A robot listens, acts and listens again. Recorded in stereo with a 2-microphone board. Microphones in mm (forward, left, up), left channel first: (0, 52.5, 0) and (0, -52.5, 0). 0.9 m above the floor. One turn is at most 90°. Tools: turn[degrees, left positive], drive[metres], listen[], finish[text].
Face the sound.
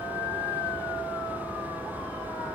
Action: listen[]
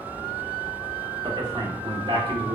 Thought: The man speaking: about 50° right or 130° right.
Action: turn[-50]
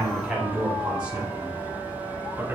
Thought: So it is at 15° right.
Action: turn[-15]
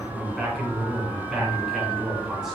Action: finish[Facing the man speaking, 2 to 4 m away.]